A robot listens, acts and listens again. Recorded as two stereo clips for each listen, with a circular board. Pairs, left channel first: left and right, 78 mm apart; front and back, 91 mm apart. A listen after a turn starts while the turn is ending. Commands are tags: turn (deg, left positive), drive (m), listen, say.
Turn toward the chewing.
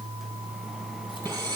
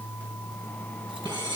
<listen/>
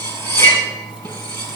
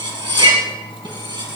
<listen/>
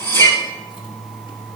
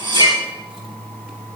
<say>I can't make out chewing to turn to.</say>